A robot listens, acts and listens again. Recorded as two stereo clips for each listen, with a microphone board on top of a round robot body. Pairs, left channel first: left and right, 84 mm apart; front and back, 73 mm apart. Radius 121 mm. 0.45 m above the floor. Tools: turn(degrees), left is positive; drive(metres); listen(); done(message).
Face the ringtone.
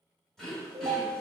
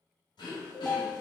turn(degrees=-100)
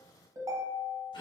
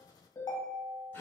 turn(degrees=-40)
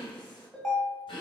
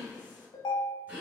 done("Facing the ringtone.")